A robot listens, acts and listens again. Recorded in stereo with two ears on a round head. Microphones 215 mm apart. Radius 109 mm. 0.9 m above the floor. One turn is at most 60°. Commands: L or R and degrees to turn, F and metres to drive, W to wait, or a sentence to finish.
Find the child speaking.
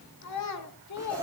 L60
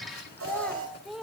Facing the child speaking, 1 to 2 m away.